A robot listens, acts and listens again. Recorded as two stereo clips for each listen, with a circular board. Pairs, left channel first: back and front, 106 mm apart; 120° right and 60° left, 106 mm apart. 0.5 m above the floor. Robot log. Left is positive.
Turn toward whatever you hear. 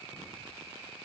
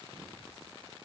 cmd idle
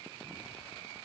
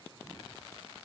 cmd idle
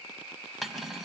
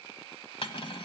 note: The cutlery clinking: 90° right.
cmd yaw -90
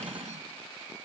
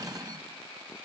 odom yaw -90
end: Facing the cutlery clinking, 2 to 4 m away.